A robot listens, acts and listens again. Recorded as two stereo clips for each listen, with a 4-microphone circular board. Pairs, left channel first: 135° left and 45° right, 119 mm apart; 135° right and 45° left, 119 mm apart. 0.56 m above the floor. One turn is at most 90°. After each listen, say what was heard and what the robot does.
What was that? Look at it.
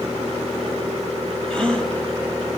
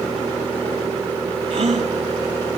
The gasp: 50° left. Turn 50° left.
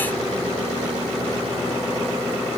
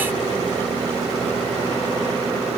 I heard a gasp from this way, but can't make it out now.